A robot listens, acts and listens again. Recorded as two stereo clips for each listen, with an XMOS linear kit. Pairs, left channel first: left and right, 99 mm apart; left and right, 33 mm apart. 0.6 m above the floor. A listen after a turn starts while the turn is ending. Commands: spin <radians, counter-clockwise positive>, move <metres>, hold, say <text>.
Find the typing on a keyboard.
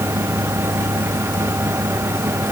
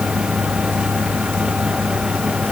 hold
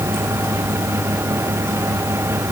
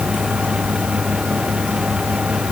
hold
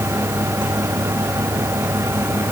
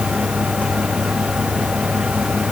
say I can't make out typing on a keyboard to turn to.